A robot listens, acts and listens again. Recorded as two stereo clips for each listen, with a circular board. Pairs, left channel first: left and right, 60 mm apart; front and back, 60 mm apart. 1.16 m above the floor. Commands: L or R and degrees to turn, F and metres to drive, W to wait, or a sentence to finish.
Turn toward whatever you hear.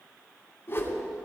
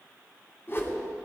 L45
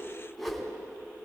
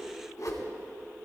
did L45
Facing the whoosh, 2 to 4 m away.